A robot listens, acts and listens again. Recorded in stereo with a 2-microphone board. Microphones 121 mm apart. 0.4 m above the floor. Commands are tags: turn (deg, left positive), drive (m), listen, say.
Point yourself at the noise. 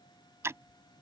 <turn deg="-25"/>
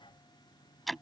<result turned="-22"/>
<say>Found it: ticking, straight ahead.</say>